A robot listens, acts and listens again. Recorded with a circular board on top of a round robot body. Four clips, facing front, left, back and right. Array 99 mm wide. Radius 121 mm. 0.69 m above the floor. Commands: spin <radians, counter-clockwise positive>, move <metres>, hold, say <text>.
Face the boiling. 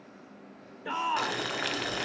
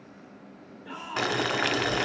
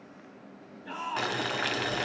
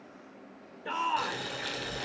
spin 1.66
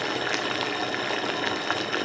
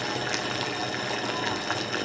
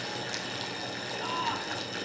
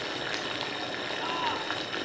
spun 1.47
spin 0.17
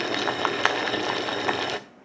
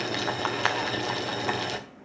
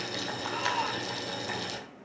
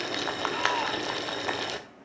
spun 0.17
say Found it: boiling, straight ahead, 1 to 2 m away.